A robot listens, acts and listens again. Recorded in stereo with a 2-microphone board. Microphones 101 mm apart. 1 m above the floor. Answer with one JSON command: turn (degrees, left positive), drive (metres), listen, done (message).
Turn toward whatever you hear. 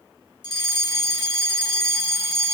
{"turn": 45}
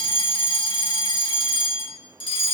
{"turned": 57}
{"turn": 70}
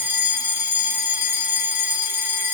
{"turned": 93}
{"turn": -25}
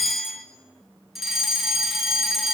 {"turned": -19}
{"done": "Facing the fire alarm, 2 to 4 m away."}